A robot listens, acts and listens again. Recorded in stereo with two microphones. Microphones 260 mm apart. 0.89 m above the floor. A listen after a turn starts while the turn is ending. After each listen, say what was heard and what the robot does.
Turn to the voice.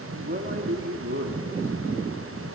The man speaking: about 45° right or 135° right. Turn 45° right.
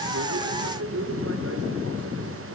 So it is at 70° right. Turn 70° right.
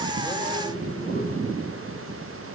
Keep listening.
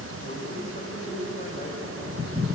The man speaking is now 35° left. Turn 35° left.
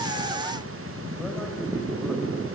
Keep listening.
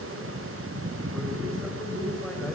Keep listening.
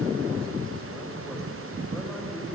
I heard a man speaking from this way, but can't make it out now.